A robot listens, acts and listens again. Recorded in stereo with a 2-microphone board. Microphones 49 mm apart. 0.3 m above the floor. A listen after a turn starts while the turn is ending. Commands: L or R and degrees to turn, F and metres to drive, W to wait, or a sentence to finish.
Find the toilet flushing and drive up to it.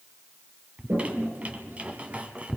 R50
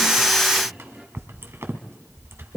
F1.0
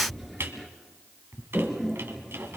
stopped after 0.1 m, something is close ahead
Blocked. The toilet flushing is further on, straight ahead.